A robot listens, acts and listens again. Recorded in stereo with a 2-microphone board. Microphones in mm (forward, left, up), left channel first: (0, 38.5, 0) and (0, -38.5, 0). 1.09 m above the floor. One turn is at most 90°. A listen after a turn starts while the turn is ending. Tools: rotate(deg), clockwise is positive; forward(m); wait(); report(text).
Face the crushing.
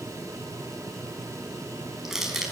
rotate(30)
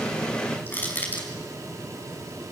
rotate(-25)
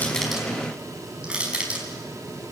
rotate(15)
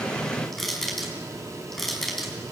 report("Facing the crushing.")